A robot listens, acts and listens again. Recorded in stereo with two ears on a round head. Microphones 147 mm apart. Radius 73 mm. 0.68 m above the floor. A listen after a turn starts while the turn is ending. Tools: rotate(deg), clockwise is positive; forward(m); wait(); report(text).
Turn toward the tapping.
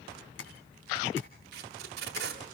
rotate(-90)
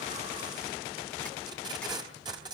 wait()
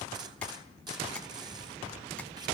wait()
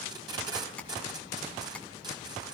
rotate(-10)
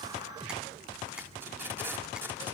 wait()
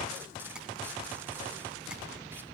wait()
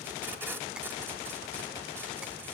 report("I heard tapping from this way, but can't make it out now.")